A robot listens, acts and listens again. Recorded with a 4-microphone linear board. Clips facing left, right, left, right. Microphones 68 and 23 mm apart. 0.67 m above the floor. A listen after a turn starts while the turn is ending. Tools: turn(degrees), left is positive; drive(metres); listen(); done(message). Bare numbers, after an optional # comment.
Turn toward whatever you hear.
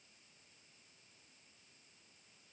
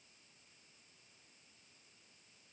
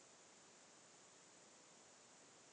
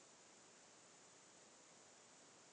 listen()
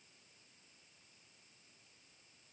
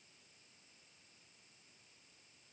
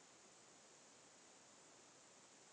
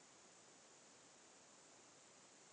listen()
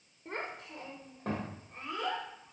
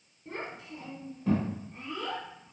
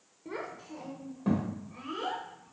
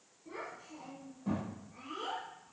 # The child speaking: about 70° left or 110° left.
turn(70)
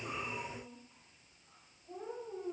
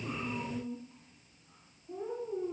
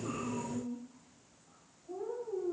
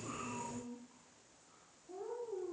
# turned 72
# So it is at 35° left.
turn(35)
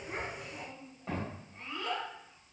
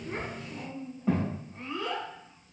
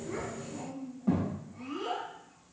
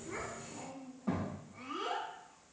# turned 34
done("Facing the child speaking, 2 to 4 m away.")